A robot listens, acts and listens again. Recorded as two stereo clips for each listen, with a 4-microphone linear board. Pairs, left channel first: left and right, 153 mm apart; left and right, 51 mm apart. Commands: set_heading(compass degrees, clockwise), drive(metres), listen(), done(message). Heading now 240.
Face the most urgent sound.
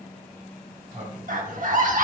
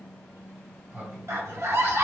set_heading(300)
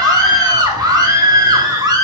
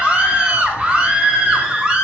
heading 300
set_heading(330)
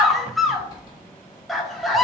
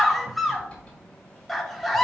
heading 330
done("Facing the scream, 1 to 2 m away.")